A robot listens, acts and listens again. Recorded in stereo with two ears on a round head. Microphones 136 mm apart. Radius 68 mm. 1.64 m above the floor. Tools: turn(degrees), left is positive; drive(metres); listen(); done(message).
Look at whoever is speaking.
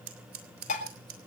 listen()
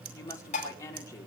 turn(degrees=20)
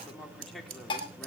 done("Facing the woman speaking, over 4 m away.")